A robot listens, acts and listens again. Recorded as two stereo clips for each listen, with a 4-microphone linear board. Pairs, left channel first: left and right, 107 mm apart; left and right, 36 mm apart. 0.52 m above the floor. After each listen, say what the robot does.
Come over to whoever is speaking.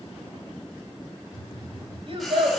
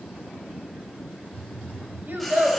Turn 55° right.
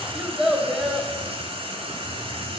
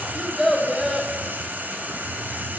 Drive 1.0 m forward.
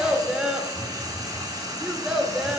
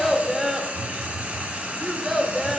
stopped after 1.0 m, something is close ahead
Turn 10° right.
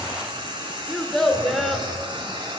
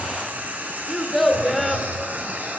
Arrived at the child speaking, straight ahead.